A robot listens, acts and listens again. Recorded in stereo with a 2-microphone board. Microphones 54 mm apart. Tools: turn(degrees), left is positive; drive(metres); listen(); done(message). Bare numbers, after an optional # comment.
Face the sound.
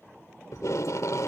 turn(90)
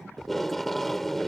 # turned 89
done("Found it: tape being pulled, straight ahead.")